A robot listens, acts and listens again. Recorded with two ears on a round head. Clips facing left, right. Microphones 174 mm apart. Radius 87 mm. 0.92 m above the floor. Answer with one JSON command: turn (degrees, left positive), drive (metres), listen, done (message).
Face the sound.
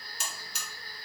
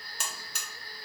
{"turn": -45}
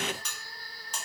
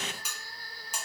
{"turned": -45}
{"turn": -10}
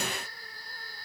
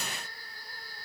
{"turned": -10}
{"listen": true}
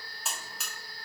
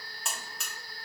{"done": "Facing the buzzer, under 1 m away."}